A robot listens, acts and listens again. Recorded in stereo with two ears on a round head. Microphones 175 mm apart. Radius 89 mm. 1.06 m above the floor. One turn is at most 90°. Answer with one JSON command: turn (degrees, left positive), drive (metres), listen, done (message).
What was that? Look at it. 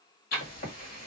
{"turn": 50}
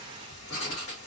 {"turn": 75}
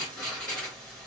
{"done": "Facing the writing, 2 to 4 m away."}